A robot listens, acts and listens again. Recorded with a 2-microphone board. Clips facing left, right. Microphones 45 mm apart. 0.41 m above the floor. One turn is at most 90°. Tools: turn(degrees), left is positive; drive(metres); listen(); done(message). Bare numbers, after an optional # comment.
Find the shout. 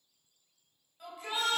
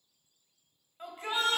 # The shout: about 40° right or 140° right.
turn(-40)
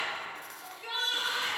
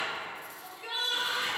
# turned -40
done("Facing the shout, 1 to 2 m away.")